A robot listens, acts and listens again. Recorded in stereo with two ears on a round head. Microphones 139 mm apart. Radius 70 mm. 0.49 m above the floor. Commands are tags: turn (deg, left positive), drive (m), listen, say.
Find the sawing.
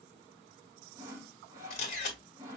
<turn deg="-20"/>
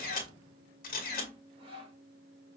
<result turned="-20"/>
<turn deg="-135"/>
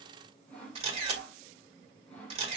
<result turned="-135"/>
<turn deg="10"/>
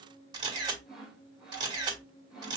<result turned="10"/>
<say>Facing the sawing, 1 to 2 m away.</say>